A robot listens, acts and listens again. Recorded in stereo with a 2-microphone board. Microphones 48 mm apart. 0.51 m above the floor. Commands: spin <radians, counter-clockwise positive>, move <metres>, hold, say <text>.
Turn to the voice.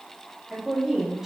spin -0.52
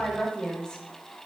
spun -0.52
spin 0.35
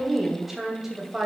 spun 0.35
spin -0.17
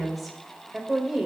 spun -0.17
say Facing the woman speaking, 1 to 2 m away.